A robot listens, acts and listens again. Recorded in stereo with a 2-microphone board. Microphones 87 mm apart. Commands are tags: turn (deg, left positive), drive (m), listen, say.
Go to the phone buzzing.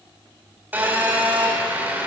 <turn deg="-20"/>
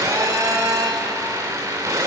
<turn deg="-140"/>
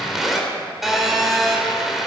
<drive m="1.0"/>
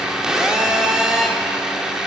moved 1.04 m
<turn deg="-10"/>
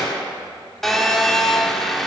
<drive m="1.0"/>
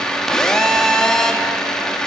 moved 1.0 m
<turn deg="10"/>
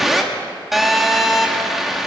<drive m="1.0"/>
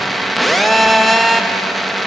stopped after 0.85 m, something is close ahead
<say>Arrived at the phone buzzing, straight ahead.</say>